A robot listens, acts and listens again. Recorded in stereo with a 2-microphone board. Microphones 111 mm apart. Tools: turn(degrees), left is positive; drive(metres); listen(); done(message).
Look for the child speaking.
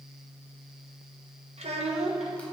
turn(degrees=-70)
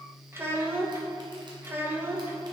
turn(degrees=-20)
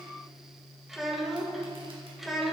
done("Facing the child speaking.")